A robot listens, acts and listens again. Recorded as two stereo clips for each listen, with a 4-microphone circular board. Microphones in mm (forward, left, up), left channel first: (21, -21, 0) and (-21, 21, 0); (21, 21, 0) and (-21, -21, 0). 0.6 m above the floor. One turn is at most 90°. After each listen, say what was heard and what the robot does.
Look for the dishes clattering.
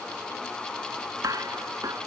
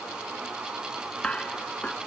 The dishes clattering: 115° left. Turn 90° left.
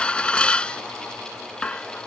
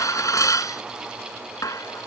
The dishes clattering is now 25° left. Turn 25° left.
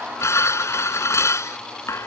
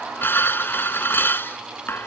Facing the dishes clattering.